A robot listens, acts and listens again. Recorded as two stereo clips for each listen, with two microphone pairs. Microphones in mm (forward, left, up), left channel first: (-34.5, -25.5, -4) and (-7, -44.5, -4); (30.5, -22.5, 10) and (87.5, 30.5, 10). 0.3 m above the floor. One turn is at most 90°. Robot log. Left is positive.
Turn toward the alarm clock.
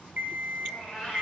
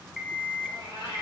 note: The alarm clock: 45° right.
cmd yaw -45
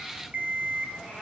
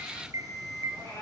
end: Found it: an alarm clock, straight ahead, 1 to 2 m away.